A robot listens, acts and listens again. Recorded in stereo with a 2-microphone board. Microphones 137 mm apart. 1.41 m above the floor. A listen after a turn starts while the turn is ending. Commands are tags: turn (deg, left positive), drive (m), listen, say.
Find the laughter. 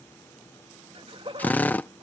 <turn deg="-40"/>
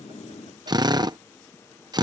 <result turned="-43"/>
<listen/>
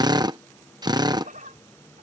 <turn deg="-110"/>
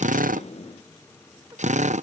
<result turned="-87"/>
<turn deg="-25"/>
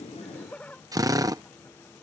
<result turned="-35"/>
<turn deg="10"/>
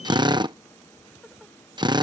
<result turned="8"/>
<listen/>
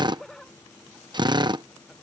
<say>Found it: laughter, straight ahead.</say>